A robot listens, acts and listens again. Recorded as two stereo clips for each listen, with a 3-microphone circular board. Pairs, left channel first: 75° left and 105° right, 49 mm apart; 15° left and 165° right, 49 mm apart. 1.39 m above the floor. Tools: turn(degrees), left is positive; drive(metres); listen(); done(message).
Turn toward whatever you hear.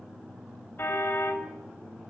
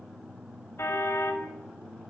turn(degrees=35)
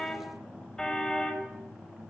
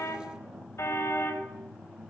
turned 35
done("Facing the car horn, over 4 m away.")